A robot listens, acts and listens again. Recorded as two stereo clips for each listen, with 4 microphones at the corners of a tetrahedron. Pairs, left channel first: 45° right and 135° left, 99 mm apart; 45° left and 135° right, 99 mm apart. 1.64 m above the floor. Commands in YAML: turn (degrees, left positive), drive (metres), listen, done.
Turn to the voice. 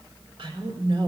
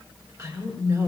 turn: 170
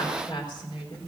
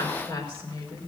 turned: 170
done: "Found it: a woman speaking, straight ahead, over 4 m away."